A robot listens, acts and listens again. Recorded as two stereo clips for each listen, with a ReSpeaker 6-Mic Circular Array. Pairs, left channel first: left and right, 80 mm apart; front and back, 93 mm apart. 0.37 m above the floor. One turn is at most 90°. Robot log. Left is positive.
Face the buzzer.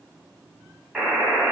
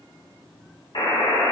end: Facing the buzzer, 1 to 2 m away.